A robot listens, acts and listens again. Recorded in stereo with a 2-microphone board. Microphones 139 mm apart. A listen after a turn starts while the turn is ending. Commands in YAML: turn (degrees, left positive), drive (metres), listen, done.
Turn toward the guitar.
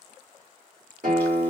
turn: -75
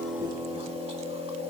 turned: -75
turn: -10
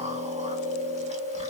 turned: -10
listen: true
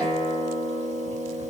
done: "Found it: a guitar, straight ahead, 1 to 2 m away."